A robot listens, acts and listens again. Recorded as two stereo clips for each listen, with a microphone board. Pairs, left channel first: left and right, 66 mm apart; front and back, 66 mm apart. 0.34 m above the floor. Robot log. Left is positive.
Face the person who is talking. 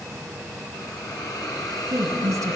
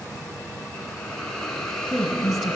note: The woman speaking: 90° right.
cmd yaw -90
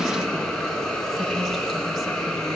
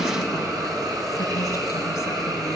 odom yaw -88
cmd idle
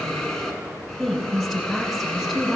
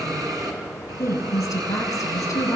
end: Facing the woman speaking.